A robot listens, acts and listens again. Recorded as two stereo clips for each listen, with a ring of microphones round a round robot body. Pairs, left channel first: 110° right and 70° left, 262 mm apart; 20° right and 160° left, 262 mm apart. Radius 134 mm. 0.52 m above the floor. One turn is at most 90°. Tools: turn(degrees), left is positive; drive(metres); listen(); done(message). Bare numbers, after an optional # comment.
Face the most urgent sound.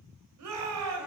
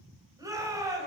# The shout: 80° left.
turn(80)
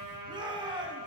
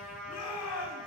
done("Facing the shout.")